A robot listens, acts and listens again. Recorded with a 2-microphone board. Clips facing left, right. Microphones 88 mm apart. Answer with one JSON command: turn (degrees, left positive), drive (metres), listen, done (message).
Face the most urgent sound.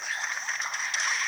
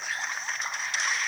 {"listen": true}
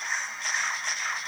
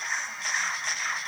{"listen": true}
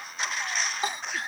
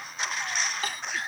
{"turn": 20}
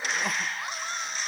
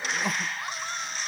{"done": "Found it: crying, straight ahead."}